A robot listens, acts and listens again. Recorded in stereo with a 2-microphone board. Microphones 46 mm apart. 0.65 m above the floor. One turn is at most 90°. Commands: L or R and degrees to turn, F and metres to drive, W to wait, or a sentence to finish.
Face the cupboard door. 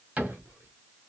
R35
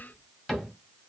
Facing the cupboard door, 1 to 2 m away.